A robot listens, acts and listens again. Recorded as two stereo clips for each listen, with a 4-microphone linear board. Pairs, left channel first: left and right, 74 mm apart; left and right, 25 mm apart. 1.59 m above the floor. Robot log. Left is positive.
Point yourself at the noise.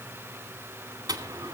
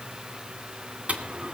note: The dropped coin: about 55° right or 125° right.
cmd yaw -55
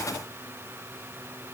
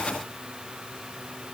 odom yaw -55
cmd idle
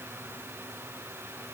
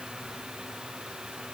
end: I heard a dropped coin, but can't make it out now. It was about straight ahead or 70° right.